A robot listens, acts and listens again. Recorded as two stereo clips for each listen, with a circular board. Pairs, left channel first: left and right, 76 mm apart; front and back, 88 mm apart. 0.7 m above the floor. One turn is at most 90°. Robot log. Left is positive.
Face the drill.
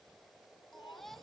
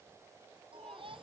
cmd idle
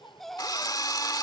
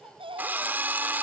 note: The drill: 115° left.
cmd yaw +90
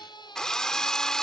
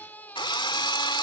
note: The drill is now 10° left.
cmd yaw +10
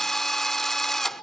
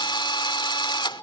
end: Found it: a drill, straight ahead.